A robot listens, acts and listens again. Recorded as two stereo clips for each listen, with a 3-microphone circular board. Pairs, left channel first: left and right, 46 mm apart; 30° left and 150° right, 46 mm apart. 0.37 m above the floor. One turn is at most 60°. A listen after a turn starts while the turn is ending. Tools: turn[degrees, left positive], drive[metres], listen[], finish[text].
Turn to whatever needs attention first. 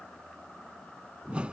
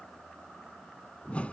Action: listen[]
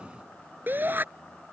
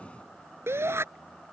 Thought: The shout: 135° right.
Action: turn[-60]
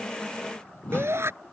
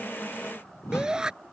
Thought: The shout is now 75° right.
Action: turn[-60]
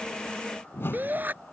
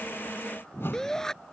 Thought: The shout is now 45° right.
Action: turn[-45]
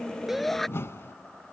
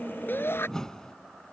Action: finish[Found it: a shout, straight ahead.]